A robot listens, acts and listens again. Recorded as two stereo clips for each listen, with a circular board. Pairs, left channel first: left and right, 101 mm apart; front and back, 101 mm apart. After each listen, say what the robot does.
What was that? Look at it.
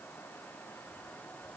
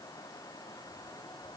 Keep listening.
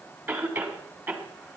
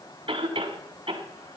Turn 155° right.
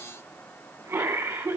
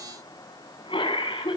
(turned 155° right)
Turn 15° right.
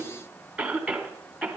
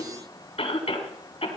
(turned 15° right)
Found it: a cough, straight ahead.